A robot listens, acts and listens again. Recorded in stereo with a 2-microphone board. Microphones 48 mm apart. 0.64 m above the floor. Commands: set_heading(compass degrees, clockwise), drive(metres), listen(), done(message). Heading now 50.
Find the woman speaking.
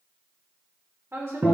set_heading(110)
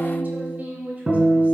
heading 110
set_heading(140)
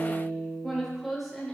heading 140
done("Found it: a woman speaking, straight ahead.")